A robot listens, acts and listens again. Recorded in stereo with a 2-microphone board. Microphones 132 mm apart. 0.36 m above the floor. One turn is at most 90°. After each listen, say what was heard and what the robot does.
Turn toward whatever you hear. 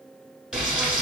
Turn 30° right.
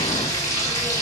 So it is at 25° left. Turn 25° left.
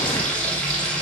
Facing the frying.